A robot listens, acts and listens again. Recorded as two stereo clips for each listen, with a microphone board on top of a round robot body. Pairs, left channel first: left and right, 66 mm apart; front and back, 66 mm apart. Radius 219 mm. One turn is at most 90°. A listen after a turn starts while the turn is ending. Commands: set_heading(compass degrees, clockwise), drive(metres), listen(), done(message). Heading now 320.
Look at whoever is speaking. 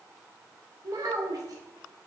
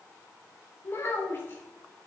set_heading(15)
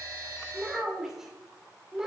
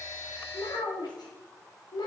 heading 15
done("Found it: a child speaking, straight ahead, 2 to 4 m away.")